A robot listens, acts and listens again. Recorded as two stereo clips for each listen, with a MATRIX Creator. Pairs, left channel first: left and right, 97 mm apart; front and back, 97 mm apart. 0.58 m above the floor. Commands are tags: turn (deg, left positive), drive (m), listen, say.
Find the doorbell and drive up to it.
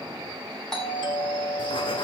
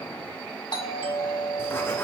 <drive m="1.0"/>
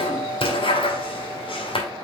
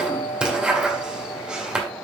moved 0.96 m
<turn deg="15"/>
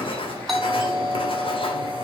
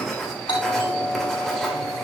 <drive m="1.0"/>
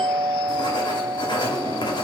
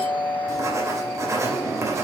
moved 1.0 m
<turn deg="10"/>
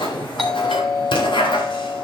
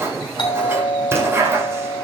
<drive m="1.0"/>
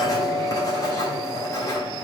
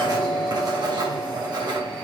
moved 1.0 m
<turn deg="10"/>
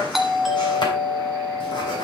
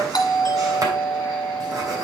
<drive m="1.0"/>
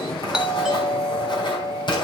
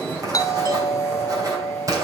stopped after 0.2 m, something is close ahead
<say>Arrived at the doorbell, straight ahead.</say>